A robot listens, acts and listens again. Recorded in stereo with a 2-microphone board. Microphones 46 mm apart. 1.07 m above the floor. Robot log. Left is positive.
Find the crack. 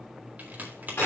note: The crack: about 40° right or 140° right.
cmd yaw -40
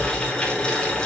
cmd idle
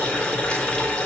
end: I heard a crack, but can't make it out now. It was about straight ahead or 100° right.